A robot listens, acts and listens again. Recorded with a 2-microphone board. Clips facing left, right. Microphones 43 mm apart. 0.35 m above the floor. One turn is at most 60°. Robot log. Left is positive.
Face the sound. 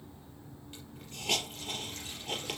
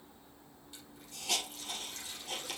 note: The hiss: about 40° left or 140° left.
cmd yaw +40
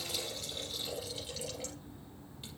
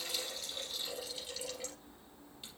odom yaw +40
end: Facing the hiss.